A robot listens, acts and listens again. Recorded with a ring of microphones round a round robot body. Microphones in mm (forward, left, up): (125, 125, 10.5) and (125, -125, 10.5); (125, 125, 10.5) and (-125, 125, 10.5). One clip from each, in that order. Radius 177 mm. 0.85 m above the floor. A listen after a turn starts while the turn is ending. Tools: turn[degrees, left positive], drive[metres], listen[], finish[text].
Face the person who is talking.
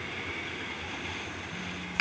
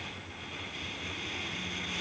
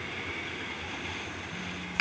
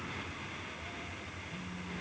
Action: listen[]
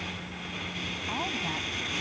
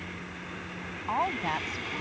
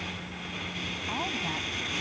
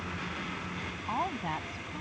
Thought: The woman speaking: 100° right.
Action: turn[-100]
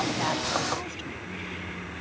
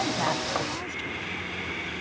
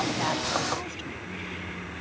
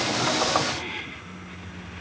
Action: listen[]
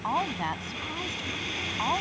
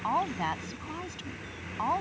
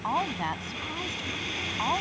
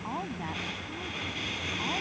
Thought: The woman speaking is now 10° right.
Action: turn[-10]
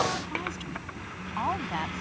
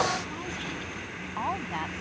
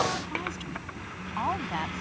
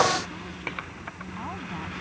Action: finish[Found it: a woman speaking, straight ahead.]